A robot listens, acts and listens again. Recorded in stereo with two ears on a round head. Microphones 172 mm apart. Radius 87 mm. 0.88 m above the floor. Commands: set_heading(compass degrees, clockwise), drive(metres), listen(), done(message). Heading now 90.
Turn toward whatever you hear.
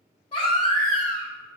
set_heading(60)
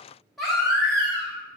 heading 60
done("Facing the baby crying.")